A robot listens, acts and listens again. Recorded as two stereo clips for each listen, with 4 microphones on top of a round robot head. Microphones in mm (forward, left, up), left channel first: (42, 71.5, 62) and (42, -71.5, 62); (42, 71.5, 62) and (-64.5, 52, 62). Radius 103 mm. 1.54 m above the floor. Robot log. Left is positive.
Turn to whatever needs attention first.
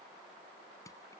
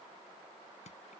cmd idle
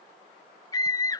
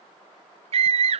note: The scream: 160° left.
cmd yaw +160
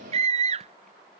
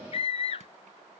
note: The scream is now 45° right.
cmd yaw -45
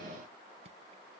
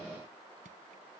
cmd idle
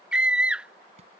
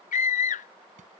end: Facing the scream.